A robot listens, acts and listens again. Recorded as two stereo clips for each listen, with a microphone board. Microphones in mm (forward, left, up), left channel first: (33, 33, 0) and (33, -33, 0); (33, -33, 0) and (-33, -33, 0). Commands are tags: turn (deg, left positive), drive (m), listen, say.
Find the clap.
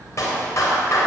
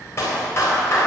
<turn deg="45"/>
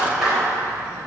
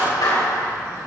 <say>Facing the clap, over 4 m away.</say>